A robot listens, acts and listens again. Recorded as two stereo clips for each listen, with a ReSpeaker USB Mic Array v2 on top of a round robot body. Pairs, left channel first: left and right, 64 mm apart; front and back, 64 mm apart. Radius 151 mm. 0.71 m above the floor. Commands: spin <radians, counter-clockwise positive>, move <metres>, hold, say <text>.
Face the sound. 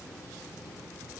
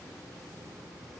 hold
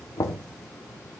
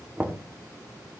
spin 2.01
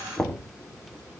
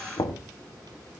say Facing the knocking, 2 to 4 m away.